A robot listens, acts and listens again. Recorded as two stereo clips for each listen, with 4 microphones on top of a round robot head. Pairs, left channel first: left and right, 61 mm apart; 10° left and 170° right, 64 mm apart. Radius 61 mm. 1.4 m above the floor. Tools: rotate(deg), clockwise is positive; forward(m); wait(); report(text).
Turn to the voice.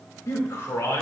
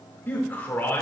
rotate(-65)
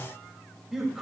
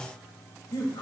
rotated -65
report("Facing the man speaking, 2 to 4 m away.")